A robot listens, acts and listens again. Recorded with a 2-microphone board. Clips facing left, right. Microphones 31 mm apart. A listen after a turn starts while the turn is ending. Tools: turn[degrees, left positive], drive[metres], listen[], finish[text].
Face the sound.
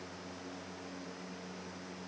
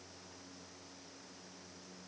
Action: listen[]
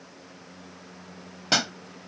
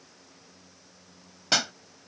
Action: turn[30]
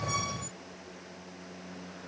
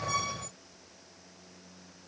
Action: listen[]
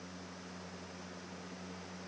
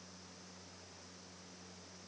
Action: finish[I heard a pop, but can't make it out now. It was about 25° right or 145° left.]